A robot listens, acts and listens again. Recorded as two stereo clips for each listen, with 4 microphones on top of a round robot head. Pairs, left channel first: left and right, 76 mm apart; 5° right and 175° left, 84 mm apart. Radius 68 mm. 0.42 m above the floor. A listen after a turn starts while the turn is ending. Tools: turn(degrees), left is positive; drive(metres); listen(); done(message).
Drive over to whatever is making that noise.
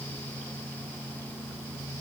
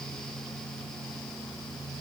listen()
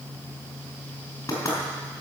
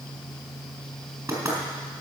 turn(degrees=135)
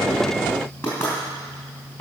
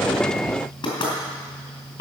turn(degrees=25)
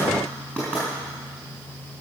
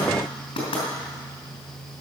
turn(degrees=10)
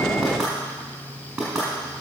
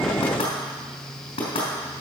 drive(metres=1.0)
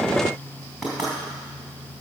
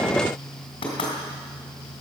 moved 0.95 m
drive(metres=1.0)
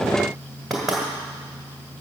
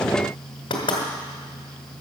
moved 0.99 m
drive(metres=1.0)
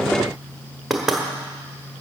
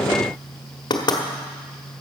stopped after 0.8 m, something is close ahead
done("Arrived at the knocking, straight ahead.")